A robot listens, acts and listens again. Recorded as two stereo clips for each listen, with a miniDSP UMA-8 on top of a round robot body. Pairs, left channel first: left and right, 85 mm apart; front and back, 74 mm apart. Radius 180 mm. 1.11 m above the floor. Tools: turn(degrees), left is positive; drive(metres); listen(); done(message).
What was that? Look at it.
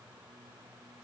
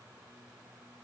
listen()
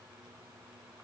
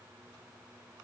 listen()
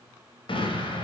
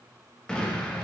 turn(degrees=80)
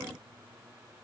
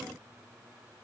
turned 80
done("Facing where the explosion came from. I can't hear it now.")